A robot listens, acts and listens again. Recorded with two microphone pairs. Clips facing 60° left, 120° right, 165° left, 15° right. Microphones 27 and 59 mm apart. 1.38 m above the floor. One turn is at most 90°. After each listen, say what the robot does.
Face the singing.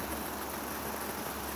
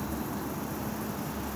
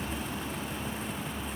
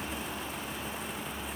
Keep listening.
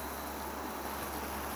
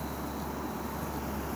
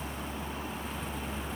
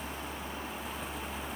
Keep listening.
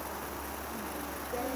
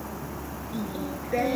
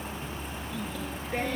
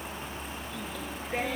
Turn 90° right.
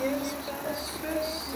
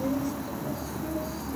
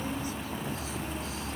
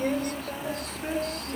Turn 20° left.
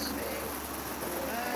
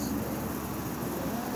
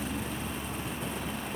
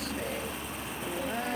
Keep listening.
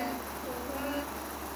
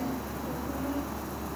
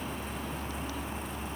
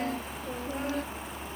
Keep listening.
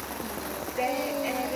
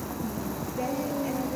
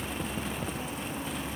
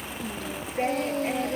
Facing the singing.